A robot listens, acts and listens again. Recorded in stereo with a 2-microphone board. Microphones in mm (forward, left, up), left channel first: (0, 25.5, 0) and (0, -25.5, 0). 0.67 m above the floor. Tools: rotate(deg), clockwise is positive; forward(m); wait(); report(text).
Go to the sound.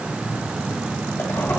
rotate(-50)
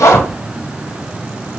rotate(-75)
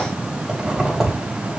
rotate(10)
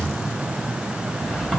wait()
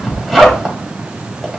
forward(1.0)
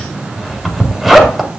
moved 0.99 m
forward(1.0)
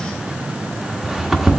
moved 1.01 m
forward(1.0)
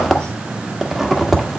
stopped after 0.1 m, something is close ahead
report("I am next to the zipper.")